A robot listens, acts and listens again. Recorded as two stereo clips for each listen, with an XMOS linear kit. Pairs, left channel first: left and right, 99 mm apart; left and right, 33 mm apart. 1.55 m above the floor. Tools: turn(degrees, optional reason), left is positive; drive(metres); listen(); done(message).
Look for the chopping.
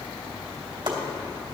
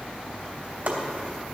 turn(degrees=-60, reason="The chopping: about 60° right or 120° right.")
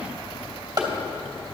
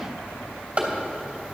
turn(degrees=-45, reason="So it is at 45° right.")
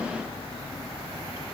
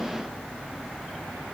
listen()
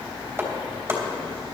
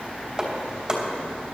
turn(degrees=-25, reason="The chopping is now 25° right.")
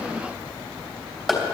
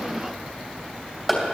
done("Facing the chopping, 2 to 4 m away.")